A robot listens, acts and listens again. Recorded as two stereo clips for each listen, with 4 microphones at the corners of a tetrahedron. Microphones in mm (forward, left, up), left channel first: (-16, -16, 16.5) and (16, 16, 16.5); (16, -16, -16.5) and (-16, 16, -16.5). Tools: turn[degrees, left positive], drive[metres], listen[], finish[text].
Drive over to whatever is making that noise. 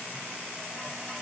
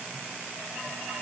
Action: listen[]
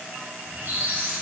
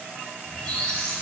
Thought: The squeak: 20° left.
Action: turn[20]
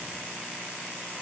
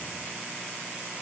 Action: listen[]
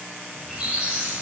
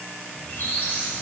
Action: drive[1.0]
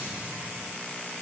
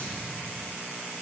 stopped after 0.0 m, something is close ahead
Action: finish[Something is in my way. I am facing the squeak but have not reached it.]